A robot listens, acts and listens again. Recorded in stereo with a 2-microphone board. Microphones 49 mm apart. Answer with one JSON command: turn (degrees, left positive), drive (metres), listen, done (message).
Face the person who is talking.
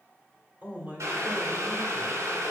{"turn": -35}
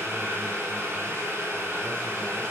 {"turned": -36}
{"listen": true}
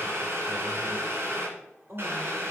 {"turn": -105}
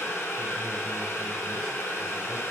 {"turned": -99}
{"listen": true}
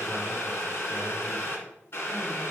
{"listen": true}
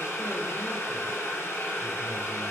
{"done": "Facing where the man speaking came from. I can't hear it now."}